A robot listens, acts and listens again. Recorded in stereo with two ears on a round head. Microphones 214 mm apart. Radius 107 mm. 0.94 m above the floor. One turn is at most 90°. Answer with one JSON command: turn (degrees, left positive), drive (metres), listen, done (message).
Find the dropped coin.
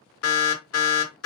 {"listen": true}
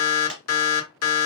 {"turn": 30}
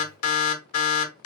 {"listen": true}
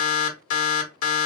{"done": "I heard a dropped coin, but can't make it out now. It was about 30° right or 150° left."}